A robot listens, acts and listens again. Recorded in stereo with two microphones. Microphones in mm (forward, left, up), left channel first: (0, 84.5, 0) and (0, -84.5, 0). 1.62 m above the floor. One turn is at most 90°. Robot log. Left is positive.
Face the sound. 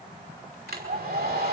cmd yaw -90
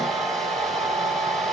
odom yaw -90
end: Facing the hair dryer, over 4 m away.